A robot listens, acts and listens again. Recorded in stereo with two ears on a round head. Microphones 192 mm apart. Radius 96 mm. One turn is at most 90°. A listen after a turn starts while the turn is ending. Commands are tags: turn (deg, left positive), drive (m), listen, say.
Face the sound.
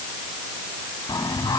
<turn deg="20"/>
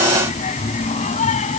<turn deg="35"/>
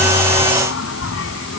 <turn deg="90"/>
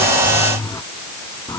<turn deg="15"/>
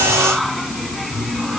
<say>Found it: singing, straight ahead.</say>